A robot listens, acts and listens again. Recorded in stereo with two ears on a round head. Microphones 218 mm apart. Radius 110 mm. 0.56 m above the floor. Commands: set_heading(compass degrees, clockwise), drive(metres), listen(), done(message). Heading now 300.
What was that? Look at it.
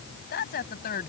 set_heading(265)
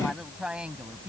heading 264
set_heading(274)
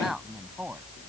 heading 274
done("Found it: a woman speaking, straight ahead.")